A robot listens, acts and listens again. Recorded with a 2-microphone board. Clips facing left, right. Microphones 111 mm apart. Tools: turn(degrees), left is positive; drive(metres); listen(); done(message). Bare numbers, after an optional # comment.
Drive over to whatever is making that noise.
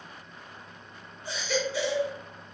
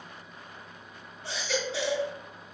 # The baby crying: about 75° right or 105° right.
turn(-75)
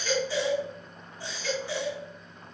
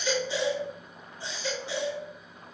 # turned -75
# So it is at 20° right.
turn(-20)
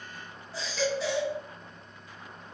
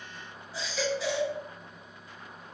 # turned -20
drive(1.0)
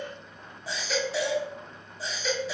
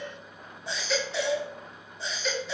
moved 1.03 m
drive(1.0)
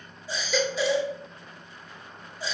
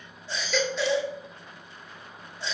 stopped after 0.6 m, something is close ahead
# The baby crying is now 10° left.
turn(10)
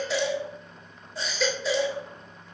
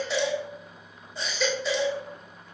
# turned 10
done("I am next to the baby crying.")